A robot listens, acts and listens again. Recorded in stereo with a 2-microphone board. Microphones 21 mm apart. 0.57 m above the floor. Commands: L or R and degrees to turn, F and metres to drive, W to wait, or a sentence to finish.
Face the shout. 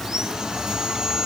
W
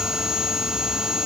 W
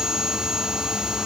I can't make out a shout, only sawing.